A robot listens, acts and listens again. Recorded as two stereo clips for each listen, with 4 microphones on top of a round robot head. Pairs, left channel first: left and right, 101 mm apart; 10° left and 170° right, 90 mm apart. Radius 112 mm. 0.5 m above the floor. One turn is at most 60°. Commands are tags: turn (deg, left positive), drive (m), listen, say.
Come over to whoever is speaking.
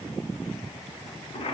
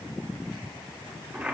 <listen/>
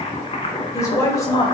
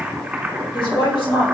<turn deg="35"/>
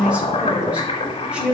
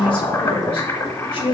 <turn deg="-10"/>
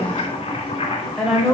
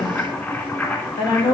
<drive m="1.0"/>
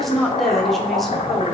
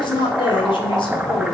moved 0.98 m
<drive m="1.0"/>
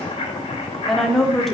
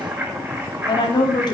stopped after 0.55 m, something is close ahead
<say>Arrived at the woman speaking, straight ahead.</say>